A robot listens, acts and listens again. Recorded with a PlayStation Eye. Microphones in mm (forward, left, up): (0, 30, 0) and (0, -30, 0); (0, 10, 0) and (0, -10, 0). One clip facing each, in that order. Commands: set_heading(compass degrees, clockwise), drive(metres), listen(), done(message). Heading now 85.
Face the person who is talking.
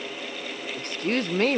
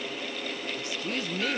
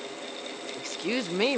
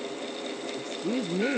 set_heading(35)
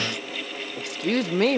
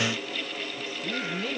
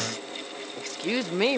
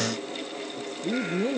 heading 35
set_heading(315)
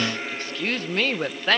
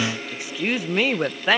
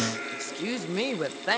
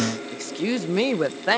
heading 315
set_heading(325)
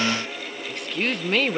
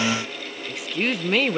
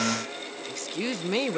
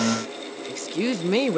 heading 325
done("Found it: a woman speaking, straight ahead.")